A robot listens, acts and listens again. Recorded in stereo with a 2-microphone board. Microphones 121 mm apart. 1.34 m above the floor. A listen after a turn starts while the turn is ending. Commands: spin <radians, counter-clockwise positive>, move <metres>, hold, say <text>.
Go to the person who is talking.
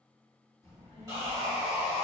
spin 0.44
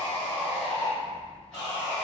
move 1.0
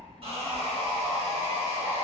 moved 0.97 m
move 1.0
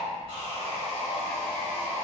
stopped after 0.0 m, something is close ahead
say I am next to the child speaking.